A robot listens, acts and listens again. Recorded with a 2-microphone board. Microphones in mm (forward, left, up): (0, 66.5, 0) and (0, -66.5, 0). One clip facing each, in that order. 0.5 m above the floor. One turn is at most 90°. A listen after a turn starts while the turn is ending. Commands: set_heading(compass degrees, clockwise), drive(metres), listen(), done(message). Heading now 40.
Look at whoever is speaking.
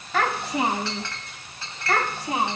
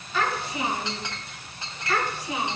set_heading(345)
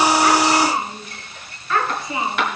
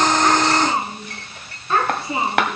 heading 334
set_heading(4)
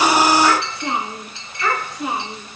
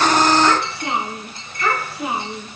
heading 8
done("Facing the child speaking, over 4 m away.")